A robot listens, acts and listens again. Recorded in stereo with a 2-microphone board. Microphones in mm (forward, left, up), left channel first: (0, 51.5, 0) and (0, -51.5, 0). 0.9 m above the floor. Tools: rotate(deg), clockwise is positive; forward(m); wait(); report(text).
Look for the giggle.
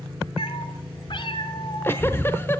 wait()
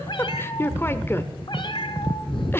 rotate(-20)
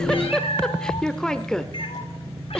rotate(-10)
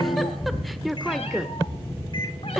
report("Facing the giggle.")